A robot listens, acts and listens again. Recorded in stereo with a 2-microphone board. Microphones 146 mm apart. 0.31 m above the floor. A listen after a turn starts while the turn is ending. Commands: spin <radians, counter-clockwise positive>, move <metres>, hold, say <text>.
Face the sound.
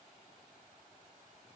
hold
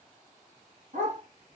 spin -1.05
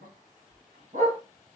spin -0.96
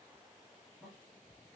hold
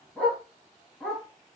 spin 0.17
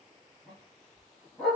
say Found it: a dog barking, straight ahead.